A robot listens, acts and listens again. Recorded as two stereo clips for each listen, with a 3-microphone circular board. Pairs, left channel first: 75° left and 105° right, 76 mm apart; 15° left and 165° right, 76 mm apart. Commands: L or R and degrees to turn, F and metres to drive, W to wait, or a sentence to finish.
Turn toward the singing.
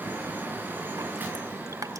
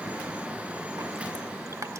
W
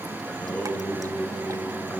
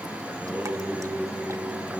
L130
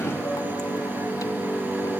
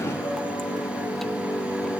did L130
Found it: singing, straight ahead.